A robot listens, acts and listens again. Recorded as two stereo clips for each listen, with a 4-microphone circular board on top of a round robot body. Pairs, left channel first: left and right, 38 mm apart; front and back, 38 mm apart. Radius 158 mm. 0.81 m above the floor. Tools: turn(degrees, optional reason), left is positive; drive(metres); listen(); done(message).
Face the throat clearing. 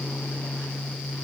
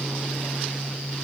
listen()
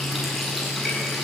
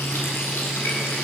listen()
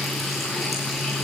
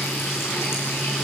done("I can't make out throat clearing.")